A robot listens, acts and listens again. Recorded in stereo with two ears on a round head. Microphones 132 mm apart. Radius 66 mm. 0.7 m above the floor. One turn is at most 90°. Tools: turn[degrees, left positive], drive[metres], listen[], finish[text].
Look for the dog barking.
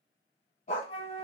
Thought: The dog barking: about 50° left or 130° left.
Action: turn[50]
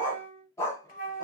Thought: So it is at 20° left.
Action: turn[20]
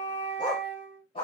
Thought: The dog barking is now 35° left.
Action: turn[35]
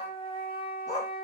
Thought: The dog barking is now 25° left.
Action: turn[25]
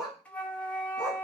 Action: finish[Facing the dog barking.]